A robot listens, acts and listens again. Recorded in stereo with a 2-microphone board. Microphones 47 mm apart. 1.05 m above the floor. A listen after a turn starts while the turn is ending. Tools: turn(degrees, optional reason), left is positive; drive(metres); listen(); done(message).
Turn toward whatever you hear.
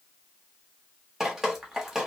turn(degrees=-30)
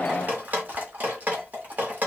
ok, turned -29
turn(degrees=-140, reason="So it is at 140° right.")
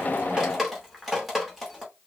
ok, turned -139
done("Found it: dripping, straight ahead.")